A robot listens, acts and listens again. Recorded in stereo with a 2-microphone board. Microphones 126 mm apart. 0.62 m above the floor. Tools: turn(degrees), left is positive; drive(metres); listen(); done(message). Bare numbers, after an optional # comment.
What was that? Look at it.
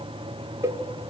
# The cowbell: about 25° right or 155° right.
turn(-25)
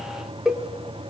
done("Facing the cowbell, 1 to 2 m away.")